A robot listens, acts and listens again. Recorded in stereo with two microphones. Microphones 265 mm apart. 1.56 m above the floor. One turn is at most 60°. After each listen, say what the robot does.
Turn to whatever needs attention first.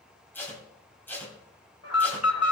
Turn 60° left.
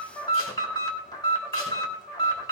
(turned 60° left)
Turn 15° left.
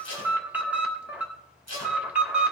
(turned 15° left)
Found it: an alarm, straight ahead.